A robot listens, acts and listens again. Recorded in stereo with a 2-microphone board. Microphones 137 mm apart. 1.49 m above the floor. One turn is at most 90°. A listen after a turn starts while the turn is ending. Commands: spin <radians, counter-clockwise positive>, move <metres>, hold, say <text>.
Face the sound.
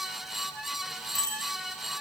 spin 0.44
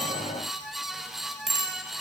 say Found it: a bicycle bell, straight ahead.